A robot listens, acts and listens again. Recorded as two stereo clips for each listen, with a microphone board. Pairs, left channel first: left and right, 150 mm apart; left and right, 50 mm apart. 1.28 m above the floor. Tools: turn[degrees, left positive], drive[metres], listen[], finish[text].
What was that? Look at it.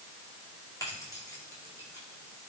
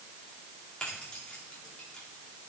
Thought: The keys jangling: about 20° left or 160° left.
Action: turn[20]
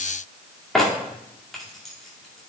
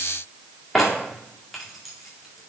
Action: finish[Found it: keys jangling, straight ahead.]